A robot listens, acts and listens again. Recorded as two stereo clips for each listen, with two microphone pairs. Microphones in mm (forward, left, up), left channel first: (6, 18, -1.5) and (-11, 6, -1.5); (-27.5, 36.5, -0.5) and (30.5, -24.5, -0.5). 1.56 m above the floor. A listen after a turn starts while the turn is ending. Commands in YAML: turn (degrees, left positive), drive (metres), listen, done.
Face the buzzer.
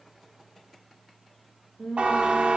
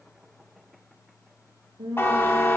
turn: -170
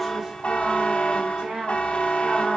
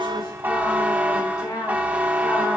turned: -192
turn: 25
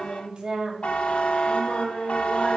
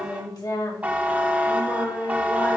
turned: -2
turn: 25
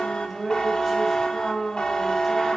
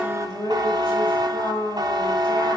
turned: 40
turn: -15
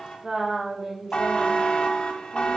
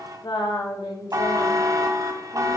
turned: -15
done: "Found it: a buzzer, straight ahead."